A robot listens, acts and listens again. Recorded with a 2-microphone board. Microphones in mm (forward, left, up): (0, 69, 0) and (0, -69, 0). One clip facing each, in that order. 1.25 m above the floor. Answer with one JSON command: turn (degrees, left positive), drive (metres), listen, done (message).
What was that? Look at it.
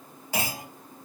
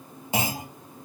{"turn": -20}
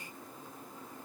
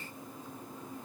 {"listen": true}
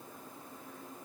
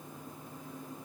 {"done": "I heard a clunk, but can't make it out now. It was about straight ahead or 140° right."}